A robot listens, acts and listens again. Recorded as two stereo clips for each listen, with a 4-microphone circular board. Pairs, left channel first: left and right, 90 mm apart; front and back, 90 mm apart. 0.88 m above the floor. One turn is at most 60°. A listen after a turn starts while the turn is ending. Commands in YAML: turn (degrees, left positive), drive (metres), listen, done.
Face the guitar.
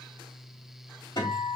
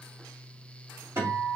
turn: 60
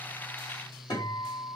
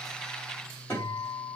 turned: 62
turn: 55
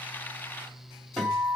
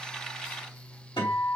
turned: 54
done: "Facing the guitar."